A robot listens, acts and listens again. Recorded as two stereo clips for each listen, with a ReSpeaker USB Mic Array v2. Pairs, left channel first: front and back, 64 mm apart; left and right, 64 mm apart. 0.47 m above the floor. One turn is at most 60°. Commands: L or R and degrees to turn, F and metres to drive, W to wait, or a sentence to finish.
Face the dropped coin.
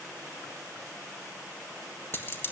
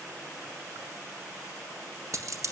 R55
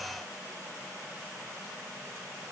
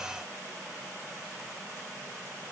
Facing where the dropped coin came from. I can't hear it now.